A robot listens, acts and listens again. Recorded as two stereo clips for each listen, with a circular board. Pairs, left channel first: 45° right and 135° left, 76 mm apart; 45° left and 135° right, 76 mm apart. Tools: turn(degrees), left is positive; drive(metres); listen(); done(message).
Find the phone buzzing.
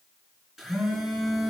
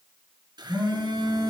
turn(degrees=-140)
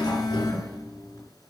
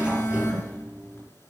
turn(degrees=-10)
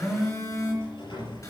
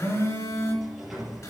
done("Found it: a phone buzzing, straight ahead.")